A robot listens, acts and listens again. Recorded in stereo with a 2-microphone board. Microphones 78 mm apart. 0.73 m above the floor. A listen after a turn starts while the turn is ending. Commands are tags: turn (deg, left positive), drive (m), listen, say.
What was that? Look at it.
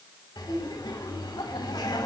<turn deg="75"/>
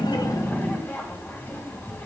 <turn deg="25"/>
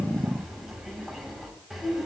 <say>Facing the laughter, over 4 m away.</say>